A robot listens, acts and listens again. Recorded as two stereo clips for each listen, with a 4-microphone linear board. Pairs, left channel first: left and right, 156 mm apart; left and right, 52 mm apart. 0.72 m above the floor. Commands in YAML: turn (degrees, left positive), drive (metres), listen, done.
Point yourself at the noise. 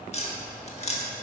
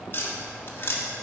turn: 45
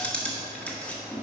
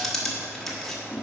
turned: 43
turn: 10
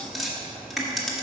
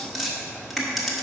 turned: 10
done: "Facing the tapping."